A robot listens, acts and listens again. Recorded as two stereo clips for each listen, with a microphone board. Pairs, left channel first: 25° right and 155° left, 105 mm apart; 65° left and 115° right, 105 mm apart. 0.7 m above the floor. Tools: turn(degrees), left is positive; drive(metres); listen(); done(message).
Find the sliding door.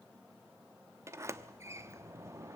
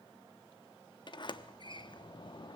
turn(degrees=100)
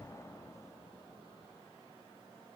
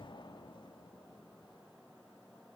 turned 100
turn(degrees=35)
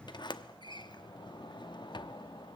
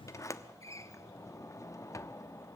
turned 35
turn(degrees=15)
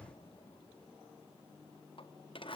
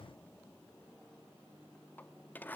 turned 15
done("Found it: a sliding door, straight ahead, under 1 m away.")